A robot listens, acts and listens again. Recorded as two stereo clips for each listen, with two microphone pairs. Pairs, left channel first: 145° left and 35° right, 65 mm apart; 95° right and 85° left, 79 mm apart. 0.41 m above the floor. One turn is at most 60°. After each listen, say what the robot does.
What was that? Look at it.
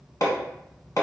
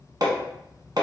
Turn 60° left.
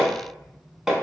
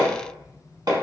Turn 55° left.
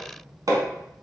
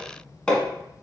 Turn 15° right.
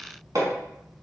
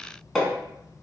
Found it: hammering, straight ahead.